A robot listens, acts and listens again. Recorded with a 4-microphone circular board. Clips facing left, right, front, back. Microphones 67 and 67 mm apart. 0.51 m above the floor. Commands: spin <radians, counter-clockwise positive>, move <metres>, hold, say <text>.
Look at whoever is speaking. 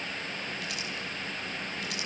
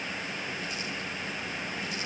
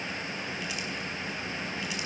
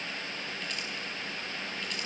hold
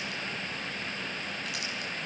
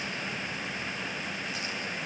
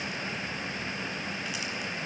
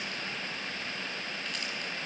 hold
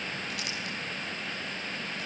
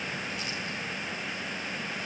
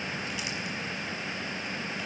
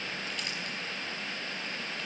say I can't make out anyone speaking to turn to.